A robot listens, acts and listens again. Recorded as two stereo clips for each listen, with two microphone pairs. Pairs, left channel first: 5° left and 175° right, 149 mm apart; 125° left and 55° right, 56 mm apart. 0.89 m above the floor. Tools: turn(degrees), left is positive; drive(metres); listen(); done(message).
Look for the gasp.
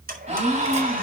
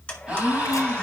turn(degrees=-130)
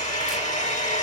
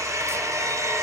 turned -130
done("Facing where the gasp came from. I can't hear it now.")